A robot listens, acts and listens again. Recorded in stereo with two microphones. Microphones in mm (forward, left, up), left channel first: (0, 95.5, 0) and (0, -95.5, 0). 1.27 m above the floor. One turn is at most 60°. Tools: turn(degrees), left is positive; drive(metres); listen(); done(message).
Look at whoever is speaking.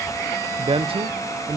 turn(degrees=-30)
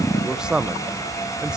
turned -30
done("Found it: a man speaking, straight ahead, under 1 m away.")